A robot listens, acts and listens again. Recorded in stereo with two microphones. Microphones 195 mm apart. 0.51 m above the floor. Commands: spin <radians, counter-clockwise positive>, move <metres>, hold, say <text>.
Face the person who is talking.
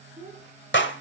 spin -0.52
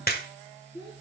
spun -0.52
spin 0.52
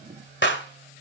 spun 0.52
hold
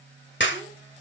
hold
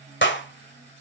say I heard a child speaking from this way, but can't make it out now.